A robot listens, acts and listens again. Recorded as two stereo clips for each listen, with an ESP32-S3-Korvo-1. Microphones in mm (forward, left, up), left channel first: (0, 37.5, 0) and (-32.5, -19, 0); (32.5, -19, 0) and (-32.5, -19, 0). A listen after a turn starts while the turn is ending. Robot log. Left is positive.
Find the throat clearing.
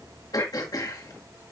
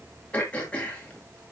note: The throat clearing: 70° left.
cmd yaw +70
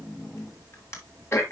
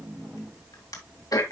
note: The throat clearing is now 15° left.
cmd yaw +15
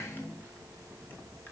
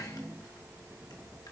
cmd idle
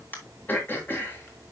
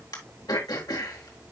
end: Facing the throat clearing.